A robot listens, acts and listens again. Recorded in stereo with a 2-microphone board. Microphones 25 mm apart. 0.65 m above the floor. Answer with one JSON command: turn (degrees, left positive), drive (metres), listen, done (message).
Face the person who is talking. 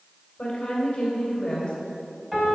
{"turn": 35}
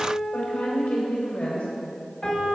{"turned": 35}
{"turn": 110}
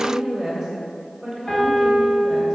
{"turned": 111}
{"done": "Found it: a woman speaking, straight ahead, 2 to 4 m away."}